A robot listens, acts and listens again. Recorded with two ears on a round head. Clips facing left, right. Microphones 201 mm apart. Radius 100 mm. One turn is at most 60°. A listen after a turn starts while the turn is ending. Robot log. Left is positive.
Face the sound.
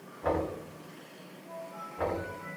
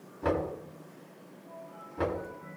note: The knocking: about 55° right or 125° right.
cmd yaw -55
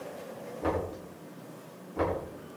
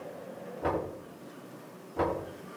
end: Facing the knocking, over 4 m away.